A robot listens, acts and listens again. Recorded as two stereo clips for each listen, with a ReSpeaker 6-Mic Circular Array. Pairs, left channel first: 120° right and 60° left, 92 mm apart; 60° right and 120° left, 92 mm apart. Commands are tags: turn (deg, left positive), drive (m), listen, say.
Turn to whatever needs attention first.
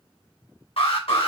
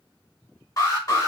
<turn deg="-115"/>
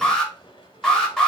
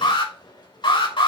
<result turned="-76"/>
<turn deg="-35"/>
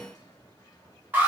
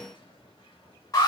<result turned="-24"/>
<turn deg="-10"/>
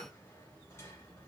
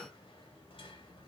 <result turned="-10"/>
<listen/>
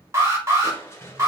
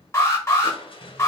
<say>Facing the alarm.</say>